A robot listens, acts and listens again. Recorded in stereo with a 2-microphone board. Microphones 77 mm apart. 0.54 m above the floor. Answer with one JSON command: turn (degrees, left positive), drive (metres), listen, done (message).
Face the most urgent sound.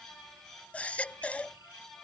{"turn": 20}
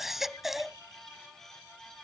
{"done": "Found it: a baby crying, straight ahead."}